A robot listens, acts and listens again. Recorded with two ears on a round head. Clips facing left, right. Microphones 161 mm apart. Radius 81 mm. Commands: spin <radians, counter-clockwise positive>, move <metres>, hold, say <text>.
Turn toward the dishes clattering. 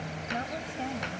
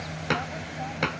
spin -1.31
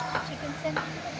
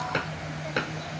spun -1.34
spin -0.52
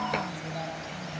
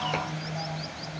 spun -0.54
hold
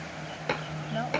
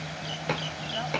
say Found it: dishes clattering, straight ahead.